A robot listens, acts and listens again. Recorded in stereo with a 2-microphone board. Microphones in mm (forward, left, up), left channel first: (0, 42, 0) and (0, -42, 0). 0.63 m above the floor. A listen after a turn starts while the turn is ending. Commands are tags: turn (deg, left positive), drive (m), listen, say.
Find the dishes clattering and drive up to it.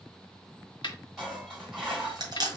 <turn deg="-30"/>
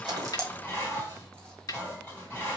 <turn deg="25"/>
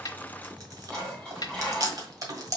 <turn deg="10"/>
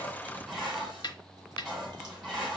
<drive m="1.0"/>
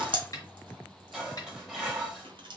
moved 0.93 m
<drive m="1.0"/>
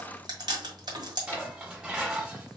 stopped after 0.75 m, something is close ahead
<turn deg="-15"/>
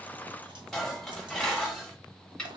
<say>I am next to the dishes clattering.</say>